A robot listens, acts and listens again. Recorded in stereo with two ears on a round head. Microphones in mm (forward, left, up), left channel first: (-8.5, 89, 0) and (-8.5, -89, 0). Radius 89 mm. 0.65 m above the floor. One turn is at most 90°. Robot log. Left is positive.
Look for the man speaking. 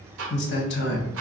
note: The man speaking: about 60° left or 120° left.
cmd yaw +60
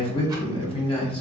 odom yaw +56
note: So it is at 30° left.
cmd yaw +30
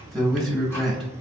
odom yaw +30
end: Found it: a man speaking, straight ahead.